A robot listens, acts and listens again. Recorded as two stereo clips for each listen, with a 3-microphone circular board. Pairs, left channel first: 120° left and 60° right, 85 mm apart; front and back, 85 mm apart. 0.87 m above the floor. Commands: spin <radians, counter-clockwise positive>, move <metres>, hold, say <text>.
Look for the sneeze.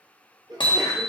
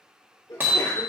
spin -0.61
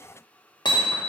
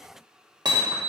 say Facing where the sneeze came from. I can't hear it now.